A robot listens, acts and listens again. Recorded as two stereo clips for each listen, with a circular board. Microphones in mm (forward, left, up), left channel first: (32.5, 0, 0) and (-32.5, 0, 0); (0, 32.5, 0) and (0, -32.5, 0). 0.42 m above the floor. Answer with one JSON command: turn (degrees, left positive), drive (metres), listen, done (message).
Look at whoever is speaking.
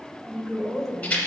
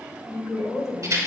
{"turn": 85}
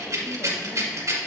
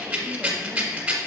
{"listen": true}
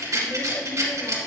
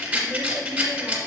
{"listen": true}
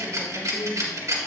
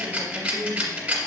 {"turn": -10}
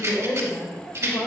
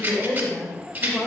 {"done": "Found it: a woman speaking, straight ahead, 1 to 2 m away."}